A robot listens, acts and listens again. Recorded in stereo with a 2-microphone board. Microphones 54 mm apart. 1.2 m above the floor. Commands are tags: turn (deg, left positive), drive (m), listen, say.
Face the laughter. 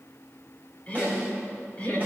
<turn deg="20"/>
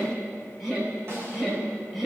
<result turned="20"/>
<say>Found it: laughter, straight ahead, over 4 m away.</say>